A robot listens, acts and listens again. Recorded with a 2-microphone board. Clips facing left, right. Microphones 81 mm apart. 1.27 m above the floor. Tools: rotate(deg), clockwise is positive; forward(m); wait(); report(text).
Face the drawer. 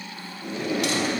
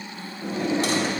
rotate(35)
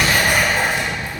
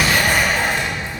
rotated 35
wait()
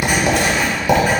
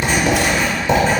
wait()
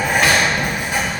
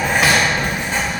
report("I heard a drawer, but can't make it out now. It was about straight ahead or 110° right.")